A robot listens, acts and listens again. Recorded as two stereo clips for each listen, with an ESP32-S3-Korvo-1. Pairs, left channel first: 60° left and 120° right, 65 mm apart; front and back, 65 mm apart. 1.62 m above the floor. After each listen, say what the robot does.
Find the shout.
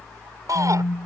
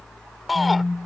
Turn 90° right.
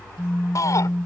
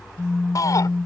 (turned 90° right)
Turn 30° left.
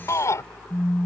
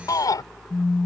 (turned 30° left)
Turn 20° left.
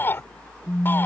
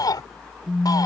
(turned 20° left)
Found it: a shout, straight ahead.